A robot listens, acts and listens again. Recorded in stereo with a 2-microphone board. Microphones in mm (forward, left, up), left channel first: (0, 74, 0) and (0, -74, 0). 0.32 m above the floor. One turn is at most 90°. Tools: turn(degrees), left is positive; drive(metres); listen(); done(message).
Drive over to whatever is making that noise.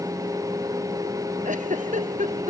turn(degrees=-60)
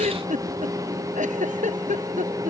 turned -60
turn(degrees=-60)
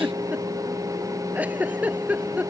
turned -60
turn(degrees=-10)
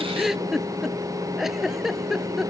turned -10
drive(metres=1.0)
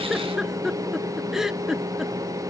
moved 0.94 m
drive(metres=1.0)
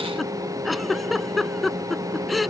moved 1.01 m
drive(metres=1.0)
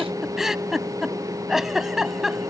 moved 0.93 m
drive(metres=1.0)
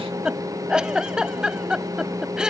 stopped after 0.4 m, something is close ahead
done("I am next to the giggle.")